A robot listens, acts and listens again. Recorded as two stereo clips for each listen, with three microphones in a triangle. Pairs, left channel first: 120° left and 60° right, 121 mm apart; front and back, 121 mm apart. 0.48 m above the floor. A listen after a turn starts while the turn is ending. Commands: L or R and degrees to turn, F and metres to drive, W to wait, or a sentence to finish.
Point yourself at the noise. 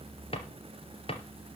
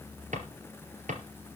L165
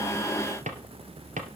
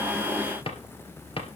R45
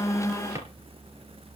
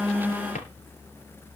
Facing the drawer, 2 to 4 m away.